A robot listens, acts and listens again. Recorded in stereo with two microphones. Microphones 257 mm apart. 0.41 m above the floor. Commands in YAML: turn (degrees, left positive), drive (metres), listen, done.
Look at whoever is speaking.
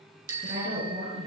turn: -50
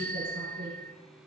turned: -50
turn: -70
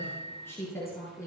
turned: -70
turn: 10
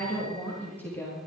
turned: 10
turn: 10
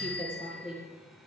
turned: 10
done: "Facing the woman speaking, over 4 m away."